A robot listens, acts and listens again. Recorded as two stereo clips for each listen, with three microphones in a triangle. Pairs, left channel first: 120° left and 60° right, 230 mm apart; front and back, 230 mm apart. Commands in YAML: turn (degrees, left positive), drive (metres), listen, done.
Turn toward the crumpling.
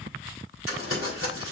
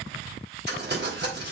turn: 140
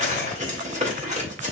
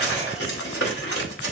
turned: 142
done: "Found it: crumpling, straight ahead."